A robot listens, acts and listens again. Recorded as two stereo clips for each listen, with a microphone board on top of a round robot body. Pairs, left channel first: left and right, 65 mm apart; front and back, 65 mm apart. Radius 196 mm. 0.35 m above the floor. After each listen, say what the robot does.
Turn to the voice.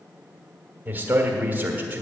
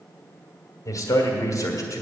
Turn 25° right.
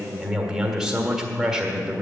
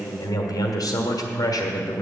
Facing the man speaking, 1 to 2 m away.